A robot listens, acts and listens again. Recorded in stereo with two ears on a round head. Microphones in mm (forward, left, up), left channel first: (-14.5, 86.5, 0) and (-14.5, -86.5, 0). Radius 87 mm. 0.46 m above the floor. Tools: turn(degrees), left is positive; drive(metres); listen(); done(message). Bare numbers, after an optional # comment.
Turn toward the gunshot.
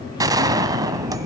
# The gunshot: about 20° right or 160° right.
turn(-20)
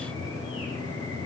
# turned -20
listen()
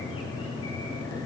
done("I heard a gunshot, but can't make it out now. It was about straight ahead or 140° right.")